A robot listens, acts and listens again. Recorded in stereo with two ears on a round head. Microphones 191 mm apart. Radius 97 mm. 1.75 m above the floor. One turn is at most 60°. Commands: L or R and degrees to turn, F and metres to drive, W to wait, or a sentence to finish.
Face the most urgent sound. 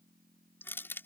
W
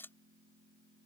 W
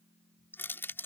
I can't make out anything urgent, only crushing.